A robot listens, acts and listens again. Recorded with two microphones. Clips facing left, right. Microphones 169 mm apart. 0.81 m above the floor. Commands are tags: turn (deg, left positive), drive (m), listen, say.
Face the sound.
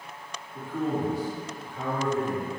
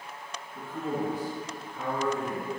<turn deg="75"/>
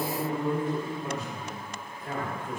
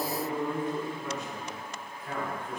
<turn deg="50"/>
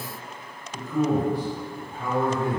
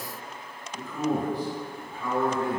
<turn deg="45"/>
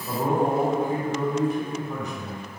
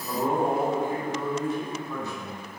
<turn deg="20"/>
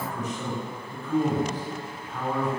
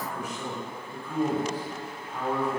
<turn deg="-10"/>
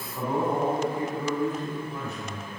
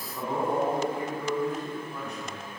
<say>Facing the man speaking, 1 to 2 m away.</say>